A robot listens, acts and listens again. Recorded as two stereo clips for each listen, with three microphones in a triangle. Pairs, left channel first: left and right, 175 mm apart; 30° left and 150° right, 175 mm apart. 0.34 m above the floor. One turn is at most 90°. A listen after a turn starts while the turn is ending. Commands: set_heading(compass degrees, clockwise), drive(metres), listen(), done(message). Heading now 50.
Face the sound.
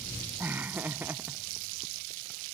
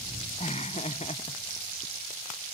set_heading(60)
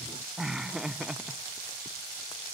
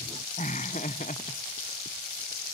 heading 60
done("Found it: laughter, straight ahead.")